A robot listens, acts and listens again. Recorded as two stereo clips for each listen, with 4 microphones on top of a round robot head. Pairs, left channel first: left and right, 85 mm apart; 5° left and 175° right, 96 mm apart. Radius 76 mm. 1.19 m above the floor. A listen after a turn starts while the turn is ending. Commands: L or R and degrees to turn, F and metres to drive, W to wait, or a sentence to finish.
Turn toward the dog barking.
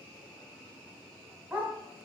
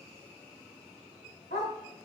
R20
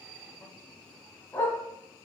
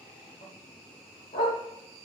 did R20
L20
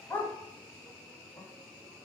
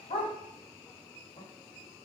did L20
L20
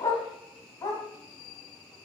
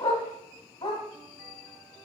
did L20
L35
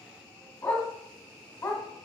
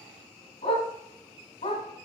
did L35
L20
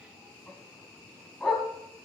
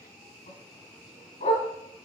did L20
Facing the dog barking.